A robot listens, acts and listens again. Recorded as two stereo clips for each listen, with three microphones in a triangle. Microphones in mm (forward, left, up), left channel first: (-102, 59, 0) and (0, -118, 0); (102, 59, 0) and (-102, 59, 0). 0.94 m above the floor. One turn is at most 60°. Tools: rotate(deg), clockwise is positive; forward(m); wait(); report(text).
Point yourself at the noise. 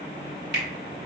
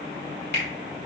rotate(30)
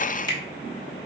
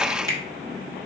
report("Facing the finger snap, 1 to 2 m away.")